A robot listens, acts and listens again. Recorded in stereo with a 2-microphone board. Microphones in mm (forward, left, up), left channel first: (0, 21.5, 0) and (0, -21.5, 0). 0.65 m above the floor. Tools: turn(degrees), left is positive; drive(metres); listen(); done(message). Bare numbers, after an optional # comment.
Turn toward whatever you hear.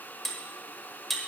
turn(30)
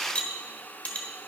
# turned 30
# So it is at 150° left.
turn(150)
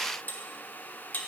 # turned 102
# The cutlery clinking is now 45° left.
turn(45)
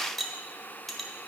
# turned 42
done("Facing the cutlery clinking.")